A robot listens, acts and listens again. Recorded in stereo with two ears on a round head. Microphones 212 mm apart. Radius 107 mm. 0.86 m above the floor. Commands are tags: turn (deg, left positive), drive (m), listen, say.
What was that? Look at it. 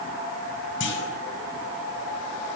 <turn deg="55"/>
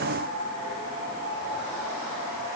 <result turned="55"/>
<listen/>
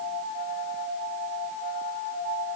<say>I heard a clunk, but can't make it out now. It was about straight ahead or 70° left.</say>